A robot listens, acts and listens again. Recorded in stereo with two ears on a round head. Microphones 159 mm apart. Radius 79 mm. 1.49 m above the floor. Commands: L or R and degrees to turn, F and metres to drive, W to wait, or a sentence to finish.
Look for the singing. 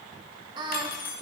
R35
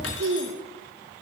R100
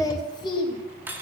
L30
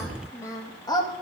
L25
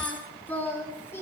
L15
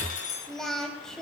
Found it: singing, straight ahead, 2 to 4 m away.